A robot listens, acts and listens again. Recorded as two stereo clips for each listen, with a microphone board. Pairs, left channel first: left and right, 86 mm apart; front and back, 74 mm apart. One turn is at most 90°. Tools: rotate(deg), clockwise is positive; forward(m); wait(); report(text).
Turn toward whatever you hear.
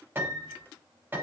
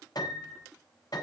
rotate(25)
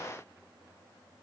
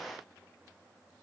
wait()
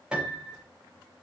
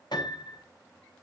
rotate(10)
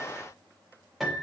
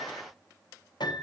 report("Facing the piano.")